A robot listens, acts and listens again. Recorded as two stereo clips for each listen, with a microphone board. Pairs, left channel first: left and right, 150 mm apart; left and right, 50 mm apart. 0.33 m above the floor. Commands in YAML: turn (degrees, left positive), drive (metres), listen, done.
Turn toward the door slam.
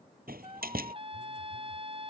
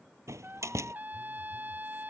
turn: -90
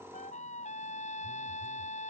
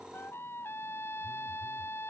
done: "I heard a door slam from this way, but can't make it out now."